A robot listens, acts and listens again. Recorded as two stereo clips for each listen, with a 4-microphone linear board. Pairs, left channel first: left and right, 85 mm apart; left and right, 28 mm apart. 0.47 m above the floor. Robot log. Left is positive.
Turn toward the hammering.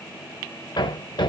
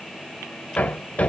note: The hammering: about 65° left or 115° left.
cmd yaw +65
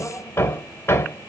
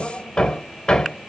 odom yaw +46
note: So it is at 30° left.
cmd yaw +30
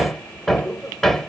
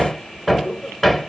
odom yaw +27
end: Facing the hammering, 1 to 2 m away.